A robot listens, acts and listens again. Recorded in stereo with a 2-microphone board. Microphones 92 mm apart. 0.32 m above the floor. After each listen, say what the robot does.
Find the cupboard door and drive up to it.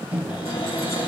Turn 60° left.
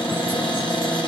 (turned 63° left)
Turn 55° left.
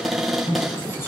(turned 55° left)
Drive 1.0 m forward.
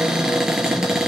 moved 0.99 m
Drive 1.0 m forward.
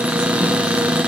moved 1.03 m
Turn 15° right.
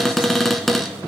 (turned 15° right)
Drive 1.0 m forward.
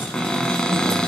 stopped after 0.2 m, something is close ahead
Turn 10° left.
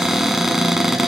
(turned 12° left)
I am next to the cupboard door.